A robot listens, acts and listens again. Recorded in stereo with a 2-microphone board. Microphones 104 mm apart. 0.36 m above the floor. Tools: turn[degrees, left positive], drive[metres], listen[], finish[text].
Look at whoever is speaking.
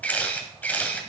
Action: listen[]
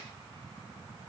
Action: listen[]
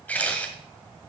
Action: finish[I can't make out anyone speaking to turn to.]